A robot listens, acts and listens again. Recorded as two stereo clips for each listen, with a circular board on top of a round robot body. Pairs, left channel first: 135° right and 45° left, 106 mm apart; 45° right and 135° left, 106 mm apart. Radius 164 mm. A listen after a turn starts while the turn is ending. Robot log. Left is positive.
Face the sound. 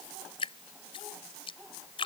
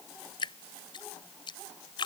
note: The dripping: 90° right.
cmd yaw -90
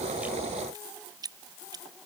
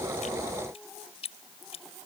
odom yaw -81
note: The dripping is now 10° right.
cmd yaw -10
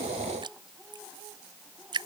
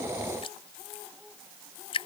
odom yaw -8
end: Found it: dripping, straight ahead.